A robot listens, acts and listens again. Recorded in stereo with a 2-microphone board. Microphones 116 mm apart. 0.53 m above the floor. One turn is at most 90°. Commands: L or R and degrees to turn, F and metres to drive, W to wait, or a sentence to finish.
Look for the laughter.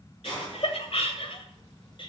L50
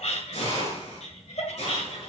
L75
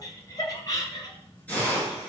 L35
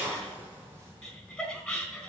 Found it: laughter, straight ahead, 2 to 4 m away.